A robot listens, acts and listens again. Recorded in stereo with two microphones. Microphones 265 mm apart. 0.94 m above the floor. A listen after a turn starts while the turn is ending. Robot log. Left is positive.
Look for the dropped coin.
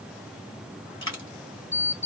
note: The dropped coin: about 45° left or 135° left.
cmd yaw +45
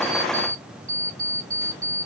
cmd idle
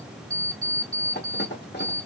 end: I heard a dropped coin, but can't make it out now. It was about straight ahead or 90° left.